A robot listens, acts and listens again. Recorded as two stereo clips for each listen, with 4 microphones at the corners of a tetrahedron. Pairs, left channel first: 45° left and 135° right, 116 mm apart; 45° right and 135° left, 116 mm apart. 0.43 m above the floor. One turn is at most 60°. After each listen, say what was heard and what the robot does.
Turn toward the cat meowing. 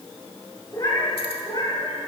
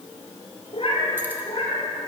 Facing the cat meowing.